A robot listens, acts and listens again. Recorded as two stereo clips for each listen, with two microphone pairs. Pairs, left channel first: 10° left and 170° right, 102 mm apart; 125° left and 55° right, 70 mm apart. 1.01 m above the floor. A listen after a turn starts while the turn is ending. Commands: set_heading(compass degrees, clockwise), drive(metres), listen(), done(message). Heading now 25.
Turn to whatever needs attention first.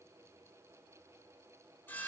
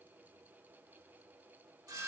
listen()
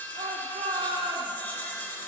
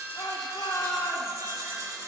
set_heading(225)
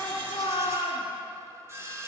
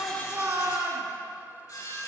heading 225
set_heading(235)
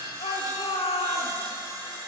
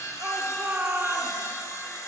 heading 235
done("Facing the shout.")